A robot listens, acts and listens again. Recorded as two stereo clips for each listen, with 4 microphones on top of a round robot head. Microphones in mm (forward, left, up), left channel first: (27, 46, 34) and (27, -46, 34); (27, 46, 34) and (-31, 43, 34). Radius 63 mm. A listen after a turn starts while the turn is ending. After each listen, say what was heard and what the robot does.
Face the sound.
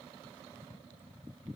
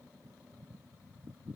Keep listening.
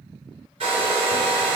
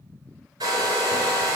The hair dryer: 130° right. Turn 130° right.
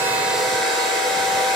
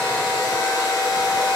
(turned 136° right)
Facing the hair dryer.